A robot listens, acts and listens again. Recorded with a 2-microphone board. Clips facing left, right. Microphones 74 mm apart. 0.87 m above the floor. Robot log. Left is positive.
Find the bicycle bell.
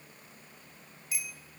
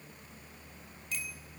cmd yaw +30
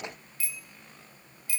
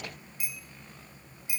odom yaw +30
note: So it is at 20° right.
cmd yaw -20
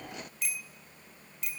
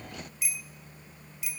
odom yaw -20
end: Facing the bicycle bell, 2 to 4 m away.